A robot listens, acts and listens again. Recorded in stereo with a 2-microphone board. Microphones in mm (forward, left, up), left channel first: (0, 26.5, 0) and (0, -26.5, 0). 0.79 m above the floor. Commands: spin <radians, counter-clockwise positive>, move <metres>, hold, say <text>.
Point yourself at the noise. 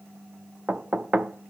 spin -0.44
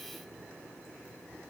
hold
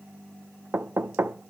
spin -2.27
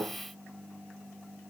spin -0.96
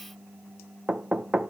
spin -0.17
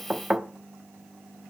say Facing the knocking, under 1 m away.